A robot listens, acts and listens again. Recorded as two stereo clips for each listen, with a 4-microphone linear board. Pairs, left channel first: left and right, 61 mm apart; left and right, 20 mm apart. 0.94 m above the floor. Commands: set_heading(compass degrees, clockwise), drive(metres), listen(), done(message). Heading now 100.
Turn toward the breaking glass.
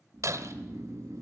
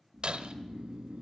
set_heading(160)
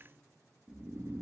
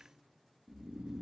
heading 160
listen()
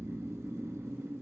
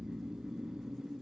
done("I heard breaking glass, but can't make it out now. It was about straight ahead or 60° right.")